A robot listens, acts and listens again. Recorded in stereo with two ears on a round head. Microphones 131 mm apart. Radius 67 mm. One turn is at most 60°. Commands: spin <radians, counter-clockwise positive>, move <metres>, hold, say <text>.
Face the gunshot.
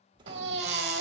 spin -0.52
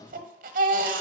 hold
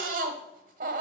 say I heard a gunshot, but can't make it out now. It was about straight ahead or 120° right.